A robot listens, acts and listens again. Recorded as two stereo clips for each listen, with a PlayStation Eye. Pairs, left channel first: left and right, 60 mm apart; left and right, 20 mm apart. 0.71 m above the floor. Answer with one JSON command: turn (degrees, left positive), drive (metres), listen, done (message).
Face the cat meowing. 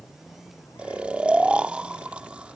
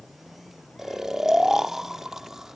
{"listen": true}
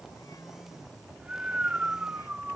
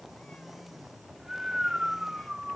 {"listen": true}
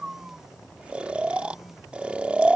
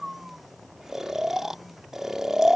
{"done": "I can't make out a cat meowing to turn to."}